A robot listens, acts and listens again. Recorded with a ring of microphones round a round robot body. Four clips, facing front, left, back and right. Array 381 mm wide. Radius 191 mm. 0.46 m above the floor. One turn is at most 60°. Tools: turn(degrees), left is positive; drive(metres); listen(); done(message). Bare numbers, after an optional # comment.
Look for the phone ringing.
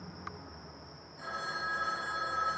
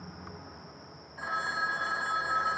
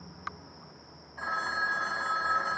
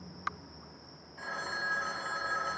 # The phone ringing: 165° left.
turn(60)
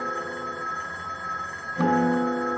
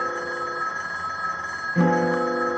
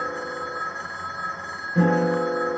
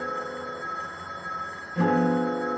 # The phone ringing is now 110° left.
turn(60)
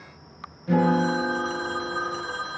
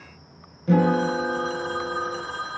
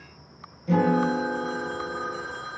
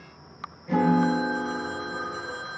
# The phone ringing is now 45° left.
turn(45)
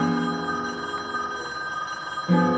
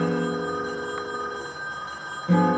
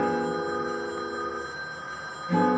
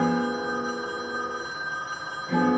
done("Found it: a phone ringing, straight ahead.")